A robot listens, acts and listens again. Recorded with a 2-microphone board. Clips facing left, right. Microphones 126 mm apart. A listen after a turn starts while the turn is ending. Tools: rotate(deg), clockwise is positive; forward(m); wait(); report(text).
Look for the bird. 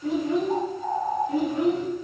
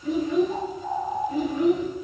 rotate(-50)
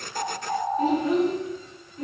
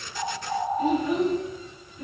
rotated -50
report("Found it: a bird, straight ahead, 1 to 2 m away.")